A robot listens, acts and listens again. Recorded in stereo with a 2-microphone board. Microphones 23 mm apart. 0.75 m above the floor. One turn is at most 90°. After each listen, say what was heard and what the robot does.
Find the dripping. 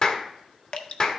The dripping: about 60° left or 120° left. Turn 60° left.
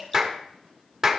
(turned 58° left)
So it is at 20° left. Turn 20° left.
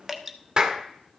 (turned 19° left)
Found it: dripping, straight ahead, under 1 m away.